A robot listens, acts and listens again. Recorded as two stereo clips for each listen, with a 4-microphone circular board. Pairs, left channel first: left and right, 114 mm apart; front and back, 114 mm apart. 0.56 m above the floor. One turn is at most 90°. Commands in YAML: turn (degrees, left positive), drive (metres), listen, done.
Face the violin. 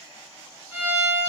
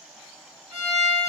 turn: -90
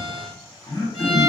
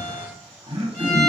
turn: -80
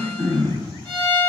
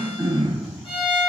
done: "Facing the violin."